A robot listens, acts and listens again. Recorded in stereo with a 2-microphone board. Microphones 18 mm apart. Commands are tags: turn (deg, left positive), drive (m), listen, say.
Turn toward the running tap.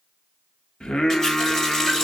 <turn deg="25"/>
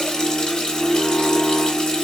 <turn deg="130"/>
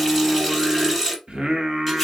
<say>Facing the running tap, 2 to 4 m away.</say>